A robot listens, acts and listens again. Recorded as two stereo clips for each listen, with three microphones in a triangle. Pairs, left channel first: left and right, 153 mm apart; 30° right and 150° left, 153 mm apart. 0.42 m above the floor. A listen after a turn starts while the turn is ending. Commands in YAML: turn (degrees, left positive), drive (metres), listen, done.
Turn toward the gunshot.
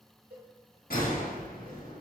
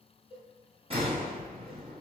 turn: 100
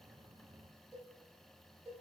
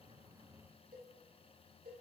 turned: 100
done: "Facing where the gunshot came from. I can't hear it now."